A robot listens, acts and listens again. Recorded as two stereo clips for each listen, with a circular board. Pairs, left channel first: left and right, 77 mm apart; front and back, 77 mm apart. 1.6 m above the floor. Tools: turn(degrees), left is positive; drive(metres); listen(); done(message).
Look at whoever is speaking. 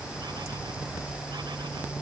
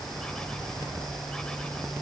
listen()
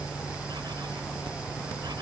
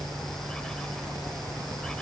listen()
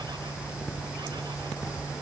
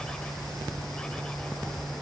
done("I can't make out anyone speaking to turn to.")